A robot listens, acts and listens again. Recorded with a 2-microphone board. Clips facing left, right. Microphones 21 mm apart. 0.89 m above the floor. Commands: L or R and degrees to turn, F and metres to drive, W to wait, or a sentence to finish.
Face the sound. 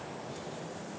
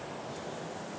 W
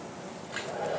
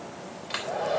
R90
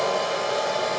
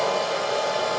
Found it: a hair dryer, straight ahead.